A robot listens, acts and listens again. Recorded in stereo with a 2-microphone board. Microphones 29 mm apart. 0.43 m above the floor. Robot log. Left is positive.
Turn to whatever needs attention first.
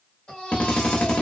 note: The baby crying: about 30° left or 150° left.
cmd yaw +30
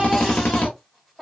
end: Found it: a baby crying, straight ahead.